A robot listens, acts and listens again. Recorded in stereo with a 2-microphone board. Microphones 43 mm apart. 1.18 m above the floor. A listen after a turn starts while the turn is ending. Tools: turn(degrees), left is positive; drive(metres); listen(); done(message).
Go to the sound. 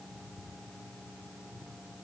listen()
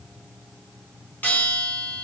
turn(degrees=40)
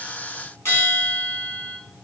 turn(degrees=95)
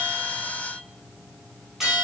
drive(metres=1.0)
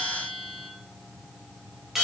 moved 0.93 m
turn(degrees=-10)
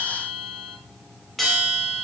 drive(metres=1.0)
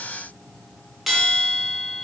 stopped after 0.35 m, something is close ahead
done("Arrived at the bell, straight ahead.")